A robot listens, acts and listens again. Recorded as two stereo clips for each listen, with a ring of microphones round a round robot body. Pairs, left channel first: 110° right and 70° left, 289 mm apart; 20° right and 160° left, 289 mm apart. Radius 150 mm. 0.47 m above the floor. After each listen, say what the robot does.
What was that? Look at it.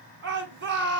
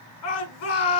Turn 15° left.
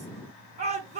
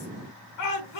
Facing the shout.